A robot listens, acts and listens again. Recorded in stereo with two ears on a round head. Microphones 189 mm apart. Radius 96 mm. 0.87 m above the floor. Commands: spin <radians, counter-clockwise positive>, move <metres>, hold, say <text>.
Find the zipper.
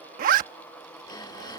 spin -0.70
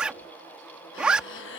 say Facing the zipper.